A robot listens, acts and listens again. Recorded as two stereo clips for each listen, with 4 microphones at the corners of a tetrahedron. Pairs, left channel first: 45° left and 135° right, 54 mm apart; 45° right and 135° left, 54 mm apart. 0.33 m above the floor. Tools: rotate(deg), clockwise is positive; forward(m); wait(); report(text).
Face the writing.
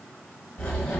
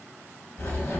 rotate(20)
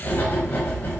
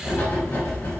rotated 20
report("Facing the writing.")